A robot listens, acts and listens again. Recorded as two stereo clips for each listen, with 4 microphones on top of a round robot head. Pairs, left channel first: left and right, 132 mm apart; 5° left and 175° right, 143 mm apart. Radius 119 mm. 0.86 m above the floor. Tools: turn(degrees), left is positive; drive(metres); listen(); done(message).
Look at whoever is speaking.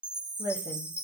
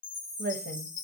turn(degrees=-155)
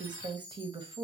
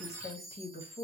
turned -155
turn(degrees=-35)
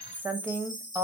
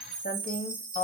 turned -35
turn(degrees=-15)
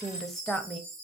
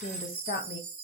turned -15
done("Facing the woman speaking.")